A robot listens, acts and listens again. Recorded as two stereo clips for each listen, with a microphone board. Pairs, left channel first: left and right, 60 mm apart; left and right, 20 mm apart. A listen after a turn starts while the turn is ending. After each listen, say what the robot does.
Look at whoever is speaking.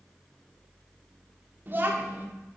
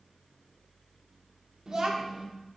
Turn 35° right.
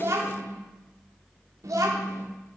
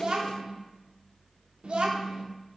Turn 105° right.
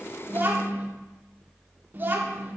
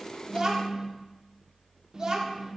Turn 40° right.
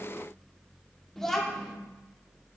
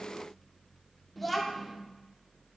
Found it: a child speaking, straight ahead.